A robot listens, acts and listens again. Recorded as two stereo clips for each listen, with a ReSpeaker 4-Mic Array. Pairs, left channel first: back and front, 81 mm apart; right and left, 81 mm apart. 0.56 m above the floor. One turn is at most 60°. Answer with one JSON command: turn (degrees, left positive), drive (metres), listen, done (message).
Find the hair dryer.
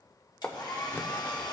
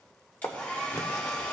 {"turn": -60}
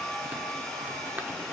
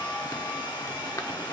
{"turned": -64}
{"turn": -60}
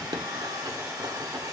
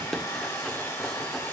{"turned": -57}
{"turn": -40}
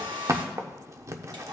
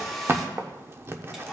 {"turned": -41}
{"done": "Facing the hair dryer."}